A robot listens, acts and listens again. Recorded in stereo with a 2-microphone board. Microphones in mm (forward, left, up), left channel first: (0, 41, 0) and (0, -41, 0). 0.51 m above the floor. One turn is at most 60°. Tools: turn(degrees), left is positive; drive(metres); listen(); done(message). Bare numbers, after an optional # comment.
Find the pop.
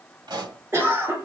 # The pop: about 60° right or 120° right.
turn(-60)
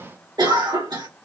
listen()
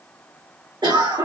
done("I heard a pop, but can't make it out now. It was about straight ahead or 60° right.")